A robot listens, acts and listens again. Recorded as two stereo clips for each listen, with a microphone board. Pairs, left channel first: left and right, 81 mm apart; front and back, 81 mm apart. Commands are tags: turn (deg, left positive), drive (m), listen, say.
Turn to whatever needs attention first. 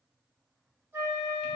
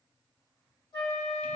<listen/>
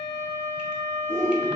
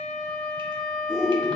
<turn deg="-90"/>
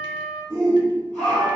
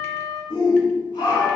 <turn deg="15"/>
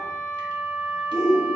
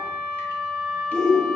<say>Found it: a shout, straight ahead, 1 to 2 m away.</say>